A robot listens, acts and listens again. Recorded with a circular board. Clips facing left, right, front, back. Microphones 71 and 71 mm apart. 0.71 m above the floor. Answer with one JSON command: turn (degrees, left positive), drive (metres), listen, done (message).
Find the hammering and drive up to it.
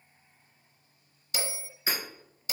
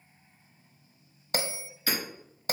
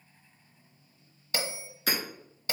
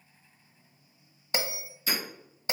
{"turn": 20}
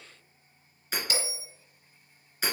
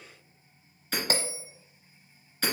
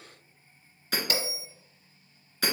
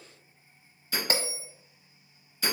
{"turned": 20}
{"turn": 10}
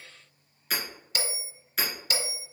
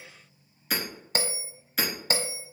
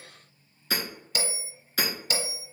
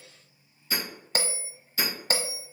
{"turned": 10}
{"drive": 1.0}
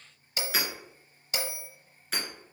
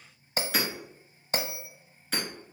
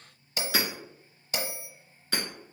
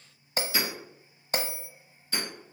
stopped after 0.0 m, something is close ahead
{"done": "Something is in my way. I am facing the hammering but have not reached it."}